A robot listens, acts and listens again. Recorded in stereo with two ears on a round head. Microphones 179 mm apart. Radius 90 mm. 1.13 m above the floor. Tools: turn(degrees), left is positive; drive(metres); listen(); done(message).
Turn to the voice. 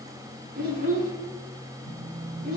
turn(degrees=-45)
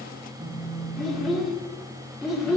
done("Facing the child speaking, 2 to 4 m away.")